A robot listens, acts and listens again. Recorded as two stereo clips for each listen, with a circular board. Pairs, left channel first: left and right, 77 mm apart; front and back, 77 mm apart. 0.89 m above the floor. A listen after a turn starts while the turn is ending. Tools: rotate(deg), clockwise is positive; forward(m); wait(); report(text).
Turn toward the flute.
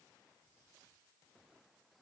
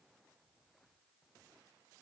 wait()
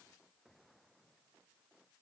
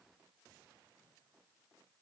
wait()
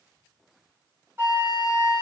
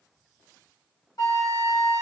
rotate(30)
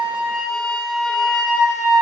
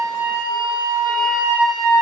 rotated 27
report("Facing the flute, 2 to 4 m away.")